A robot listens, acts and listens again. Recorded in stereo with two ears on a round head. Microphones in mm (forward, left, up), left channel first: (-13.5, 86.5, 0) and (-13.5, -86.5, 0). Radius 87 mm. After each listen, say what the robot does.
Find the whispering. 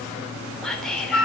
Turn 30° left.
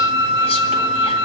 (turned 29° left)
Keep listening.
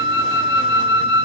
Keep listening.
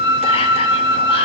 I heard whispering, but can't make it out now. It was about 25° right or 150° left.